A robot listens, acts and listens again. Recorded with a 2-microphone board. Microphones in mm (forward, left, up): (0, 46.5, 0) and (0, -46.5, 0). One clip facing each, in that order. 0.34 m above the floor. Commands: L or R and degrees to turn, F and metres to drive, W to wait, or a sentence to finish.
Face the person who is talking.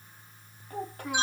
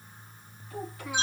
L50
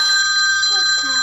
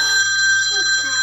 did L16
W
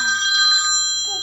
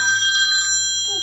W
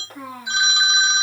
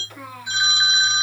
L40
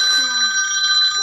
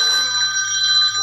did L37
W
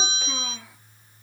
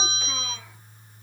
W
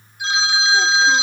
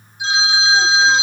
Facing where the child speaking came from. I can't hear it now.